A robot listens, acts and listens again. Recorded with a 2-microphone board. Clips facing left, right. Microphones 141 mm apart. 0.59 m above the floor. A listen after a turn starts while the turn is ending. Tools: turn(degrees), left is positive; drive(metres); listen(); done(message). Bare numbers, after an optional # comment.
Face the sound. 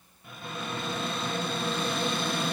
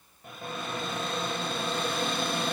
# The cupboard door: about 55° right or 125° right.
turn(-55)
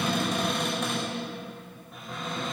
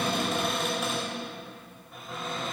done("Found it: a cupboard door, straight ahead.")